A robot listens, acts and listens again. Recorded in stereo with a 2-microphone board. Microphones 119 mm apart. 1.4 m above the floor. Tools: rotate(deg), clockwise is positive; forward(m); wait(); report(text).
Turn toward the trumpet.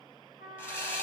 rotate(-90)
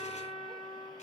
report("Found it: a trumpet, straight ahead.")